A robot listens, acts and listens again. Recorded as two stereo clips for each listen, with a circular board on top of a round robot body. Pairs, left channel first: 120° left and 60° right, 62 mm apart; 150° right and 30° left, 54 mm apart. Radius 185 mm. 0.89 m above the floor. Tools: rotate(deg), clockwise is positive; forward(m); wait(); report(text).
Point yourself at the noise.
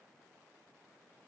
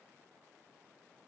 wait()
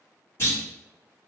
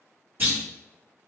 rotate(-80)
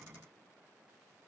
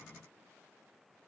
report("I heard a clunk from this way, but can't make it out now.")